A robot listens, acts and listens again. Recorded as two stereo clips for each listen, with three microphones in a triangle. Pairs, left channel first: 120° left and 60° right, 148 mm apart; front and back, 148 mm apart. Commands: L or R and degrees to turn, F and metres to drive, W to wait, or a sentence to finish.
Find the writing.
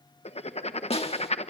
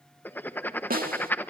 L80
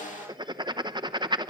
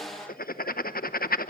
Found it: writing, straight ahead, under 1 m away.